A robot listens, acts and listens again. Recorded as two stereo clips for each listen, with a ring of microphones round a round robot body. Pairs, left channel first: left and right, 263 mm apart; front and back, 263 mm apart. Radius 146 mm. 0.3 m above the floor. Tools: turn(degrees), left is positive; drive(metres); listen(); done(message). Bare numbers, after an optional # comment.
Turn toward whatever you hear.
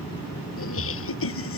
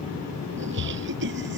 # The laughter: 125° left.
turn(125)
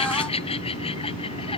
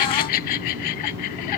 # The laughter is now 20° left.
turn(20)
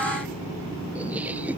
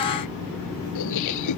done("Facing the laughter.")